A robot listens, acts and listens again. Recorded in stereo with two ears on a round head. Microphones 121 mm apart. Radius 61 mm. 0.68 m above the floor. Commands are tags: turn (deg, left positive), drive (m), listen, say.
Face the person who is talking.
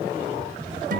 <listen/>
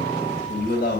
<turn deg="90"/>
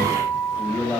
<turn deg="10"/>
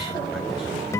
<listen/>
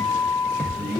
<say>Facing the man speaking.</say>